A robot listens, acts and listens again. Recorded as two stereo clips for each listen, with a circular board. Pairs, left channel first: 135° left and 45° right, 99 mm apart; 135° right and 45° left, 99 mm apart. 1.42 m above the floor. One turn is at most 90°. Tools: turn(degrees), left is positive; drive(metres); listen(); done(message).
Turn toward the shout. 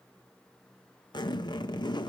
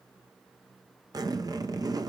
listen()
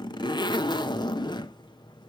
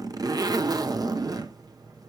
listen()
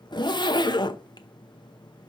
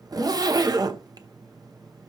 done("I can't make out a shout to turn to.")